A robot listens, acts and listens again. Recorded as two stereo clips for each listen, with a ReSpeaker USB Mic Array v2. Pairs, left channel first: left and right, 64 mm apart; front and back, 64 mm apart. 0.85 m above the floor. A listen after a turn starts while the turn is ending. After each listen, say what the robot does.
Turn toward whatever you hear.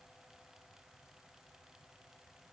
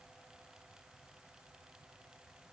Keep listening.
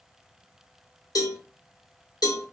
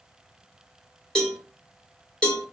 Turn 80° left.
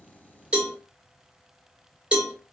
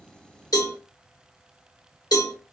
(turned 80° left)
Turn 15° right.
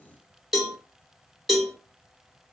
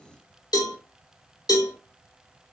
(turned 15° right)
Facing the cowbell, 1 to 2 m away.